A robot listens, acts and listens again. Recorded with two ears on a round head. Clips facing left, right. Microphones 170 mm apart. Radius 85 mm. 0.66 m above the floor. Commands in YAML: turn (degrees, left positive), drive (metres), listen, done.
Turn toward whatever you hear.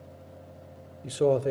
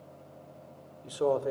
turn: 30
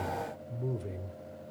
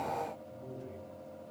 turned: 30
turn: 110
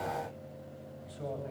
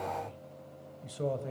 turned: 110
turn: -55
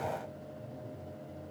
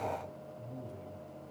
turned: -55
turn: -35
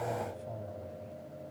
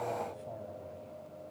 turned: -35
done: "Found it: a man speaking, straight ahead."